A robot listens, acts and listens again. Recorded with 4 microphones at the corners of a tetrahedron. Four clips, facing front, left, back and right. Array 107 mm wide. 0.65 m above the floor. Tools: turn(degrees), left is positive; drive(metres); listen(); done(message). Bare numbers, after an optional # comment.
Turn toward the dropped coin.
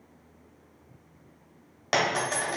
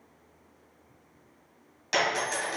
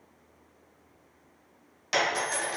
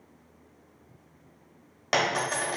# The dropped coin: 50° right.
turn(-50)
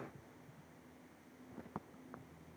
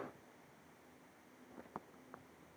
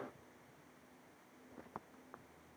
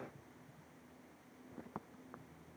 done("I heard a dropped coin from this way, but can't make it out now.")